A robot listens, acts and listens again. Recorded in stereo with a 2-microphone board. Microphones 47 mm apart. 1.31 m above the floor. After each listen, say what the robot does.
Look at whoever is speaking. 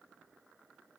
Keep listening.
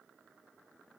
Keep listening.
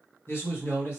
Turn 60° left.
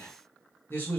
Turn 55° left.
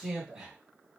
Turn 10° right.
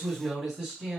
Facing the man speaking.